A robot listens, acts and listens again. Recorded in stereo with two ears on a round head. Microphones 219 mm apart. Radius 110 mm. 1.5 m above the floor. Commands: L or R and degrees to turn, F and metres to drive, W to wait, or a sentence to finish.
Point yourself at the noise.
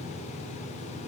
W
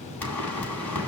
L30
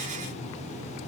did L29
W
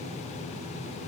I heard a pop, but can't make it out now. It was about 20° right or 145° left.